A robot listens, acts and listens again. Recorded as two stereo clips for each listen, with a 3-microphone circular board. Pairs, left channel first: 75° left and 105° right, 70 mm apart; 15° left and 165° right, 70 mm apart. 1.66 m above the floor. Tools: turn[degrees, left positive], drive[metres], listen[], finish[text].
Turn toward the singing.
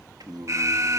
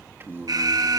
Thought: The singing: 110° right.
Action: turn[-110]
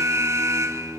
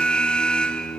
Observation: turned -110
Thought: The singing is now 25° right.
Action: turn[-25]
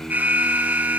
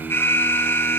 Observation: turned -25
Action: finish[Found it: singing, straight ahead.]